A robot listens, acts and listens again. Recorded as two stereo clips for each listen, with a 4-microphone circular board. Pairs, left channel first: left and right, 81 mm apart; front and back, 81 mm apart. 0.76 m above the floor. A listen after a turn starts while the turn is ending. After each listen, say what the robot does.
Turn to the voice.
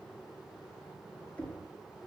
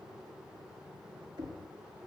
Keep listening.
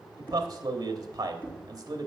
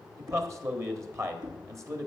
Turn 130° right.
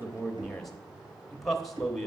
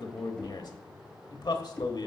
Found it: a man speaking, straight ahead.